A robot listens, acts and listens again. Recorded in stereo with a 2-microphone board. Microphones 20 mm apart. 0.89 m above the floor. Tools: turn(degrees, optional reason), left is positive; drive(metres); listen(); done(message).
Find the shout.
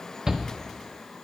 turn(degrees=-25, reason="The shout: about 25° right or 155° right.")
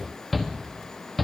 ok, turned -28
done("Found it: a shout, straight ahead, 1 to 2 m away.")